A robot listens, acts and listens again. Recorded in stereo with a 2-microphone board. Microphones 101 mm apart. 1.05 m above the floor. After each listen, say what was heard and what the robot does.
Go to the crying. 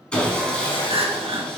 The crying: about 70° right or 110° right. Turn 70° right.
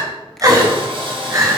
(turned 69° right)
So it is at 35° right. Turn 35° right.
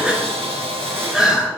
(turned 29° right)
Drive 1.0 m forward.
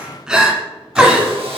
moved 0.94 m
The crying is now 10° right. Turn 10° right.
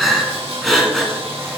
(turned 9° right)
Drive 1.0 m forward.
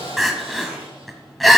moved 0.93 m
Drive 1.0 m forward.
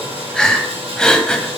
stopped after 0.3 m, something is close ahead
The crying is now 10° left. Turn 10° left.
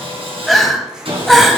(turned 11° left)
Arrived at the crying, straight ahead.